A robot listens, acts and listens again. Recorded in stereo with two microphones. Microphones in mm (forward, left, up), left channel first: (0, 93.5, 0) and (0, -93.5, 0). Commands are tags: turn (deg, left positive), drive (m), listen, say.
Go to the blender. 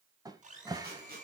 <turn deg="-40"/>
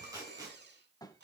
<turn deg="-95"/>
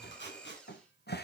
<drive m="1.0"/>
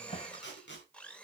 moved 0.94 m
<drive m="1.0"/>
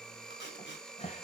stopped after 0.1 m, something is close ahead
<say>I am next to the blender.</say>